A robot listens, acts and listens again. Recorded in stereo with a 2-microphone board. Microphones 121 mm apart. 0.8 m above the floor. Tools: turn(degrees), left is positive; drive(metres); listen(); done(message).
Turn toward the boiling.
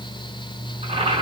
turn(degrees=-70)
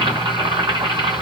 turn(degrees=-40)
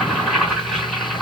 done("Found it: boiling, straight ahead, 2 to 4 m away.")